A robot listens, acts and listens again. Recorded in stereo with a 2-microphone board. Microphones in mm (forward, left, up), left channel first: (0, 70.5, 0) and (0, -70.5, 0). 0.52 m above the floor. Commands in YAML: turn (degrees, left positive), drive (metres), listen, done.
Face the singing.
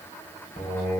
turn: 50
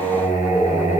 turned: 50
turn: 65
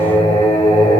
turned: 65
turn: 35
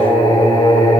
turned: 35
turn: 30
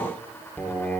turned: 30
turn: 10
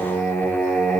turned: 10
done: "Facing the singing, 1 to 2 m away."